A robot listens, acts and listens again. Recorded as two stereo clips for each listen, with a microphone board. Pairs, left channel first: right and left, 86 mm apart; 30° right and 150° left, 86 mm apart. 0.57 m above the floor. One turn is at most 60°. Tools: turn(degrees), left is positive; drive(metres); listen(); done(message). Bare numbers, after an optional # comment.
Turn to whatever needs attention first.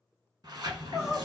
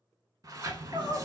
# The crying: 175° left.
turn(60)
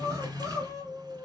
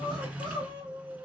# The crying is now 140° left.
turn(60)
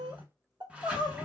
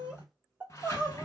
# The crying is now 75° left.
turn(60)
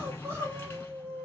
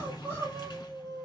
# The crying is now 30° left.
turn(30)
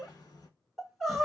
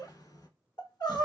done("Found it: crying, straight ahead.")